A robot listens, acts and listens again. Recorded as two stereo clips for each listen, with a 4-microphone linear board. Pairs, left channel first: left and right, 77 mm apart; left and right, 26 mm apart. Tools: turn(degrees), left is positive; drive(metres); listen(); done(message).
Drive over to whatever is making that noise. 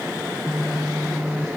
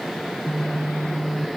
turn(degrees=15)
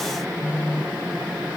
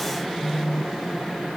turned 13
turn(degrees=150)
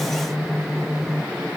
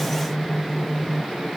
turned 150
drive(metres=1.0)
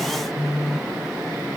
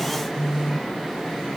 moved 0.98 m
drive(metres=1.0)
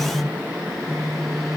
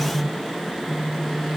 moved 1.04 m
drive(metres=1.0)
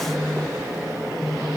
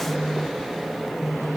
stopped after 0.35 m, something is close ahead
done("I am next to the phone buzzing.")